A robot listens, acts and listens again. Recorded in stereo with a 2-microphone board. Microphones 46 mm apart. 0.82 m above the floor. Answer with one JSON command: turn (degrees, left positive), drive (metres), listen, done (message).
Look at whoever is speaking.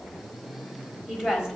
{"turn": -30}
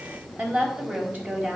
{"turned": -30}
{"turn": -140}
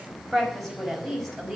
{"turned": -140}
{"done": "Found it: a woman speaking, straight ahead."}